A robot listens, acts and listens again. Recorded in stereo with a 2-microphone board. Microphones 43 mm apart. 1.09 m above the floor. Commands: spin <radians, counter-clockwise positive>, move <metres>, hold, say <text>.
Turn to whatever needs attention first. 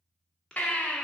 spin 0.52
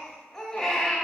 say Facing the baby crying, 1 to 2 m away.